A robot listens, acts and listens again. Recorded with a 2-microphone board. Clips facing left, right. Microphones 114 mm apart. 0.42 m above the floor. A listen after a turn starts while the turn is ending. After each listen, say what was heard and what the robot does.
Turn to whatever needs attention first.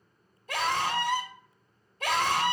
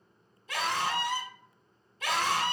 The scream: about 50° left or 130° left. Turn 50° left.
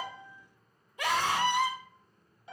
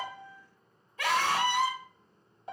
So it is at 20° left. Turn 20° left.
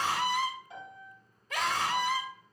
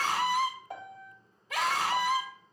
Facing the scream.